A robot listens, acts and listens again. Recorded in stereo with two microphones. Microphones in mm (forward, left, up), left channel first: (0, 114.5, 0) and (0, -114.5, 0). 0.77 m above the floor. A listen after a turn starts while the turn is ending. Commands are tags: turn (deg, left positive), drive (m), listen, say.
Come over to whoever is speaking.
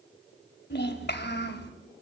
<turn deg="55"/>
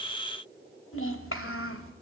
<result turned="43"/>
<turn deg="85"/>
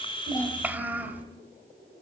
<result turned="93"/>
<turn deg="-10"/>
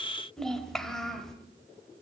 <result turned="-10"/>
<drive m="1.0"/>
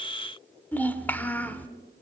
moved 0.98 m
<turn deg="10"/>
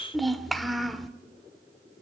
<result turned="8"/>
<drive m="1.0"/>
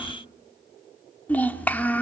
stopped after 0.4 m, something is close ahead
<say>Arrived at the child speaking, straight ahead.</say>